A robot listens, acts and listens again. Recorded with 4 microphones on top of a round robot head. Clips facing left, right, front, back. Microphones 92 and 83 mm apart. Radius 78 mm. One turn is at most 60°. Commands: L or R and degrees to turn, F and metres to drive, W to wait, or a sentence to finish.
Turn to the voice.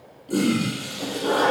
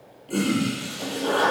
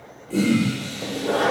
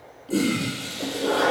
W
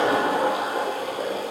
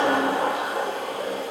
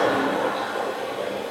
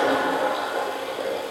W
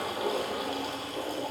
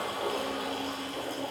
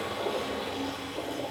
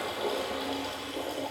I can't make out anyone speaking to turn to.